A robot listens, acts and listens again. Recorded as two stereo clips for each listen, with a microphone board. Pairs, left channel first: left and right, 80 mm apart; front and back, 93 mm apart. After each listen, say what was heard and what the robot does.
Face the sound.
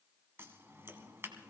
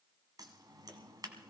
The scissors: 145° right. Turn 145° right.
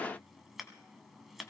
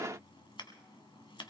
Found it: scissors, straight ahead, 1 to 2 m away.